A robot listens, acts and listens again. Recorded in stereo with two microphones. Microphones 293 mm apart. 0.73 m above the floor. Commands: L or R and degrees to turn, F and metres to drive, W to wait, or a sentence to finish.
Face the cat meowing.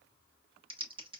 W
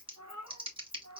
L65
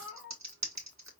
R10
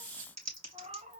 R25
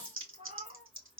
R25
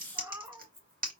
R10
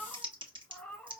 Facing the cat meowing, 1 to 2 m away.